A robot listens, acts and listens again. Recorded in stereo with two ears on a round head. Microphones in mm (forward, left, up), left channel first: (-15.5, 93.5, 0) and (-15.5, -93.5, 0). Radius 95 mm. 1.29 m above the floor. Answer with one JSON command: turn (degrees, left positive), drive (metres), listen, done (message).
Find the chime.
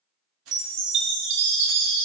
{"turn": -60}
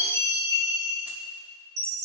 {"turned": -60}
{"turn": -55}
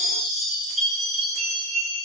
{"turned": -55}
{"done": "Facing the chime, 1 to 2 m away."}